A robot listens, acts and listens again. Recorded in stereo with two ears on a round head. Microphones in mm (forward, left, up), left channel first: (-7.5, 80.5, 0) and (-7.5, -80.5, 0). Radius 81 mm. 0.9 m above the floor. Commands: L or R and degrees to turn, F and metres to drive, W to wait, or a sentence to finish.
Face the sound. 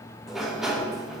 R30
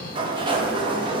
R150
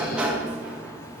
Facing the sliding door, 1 to 2 m away.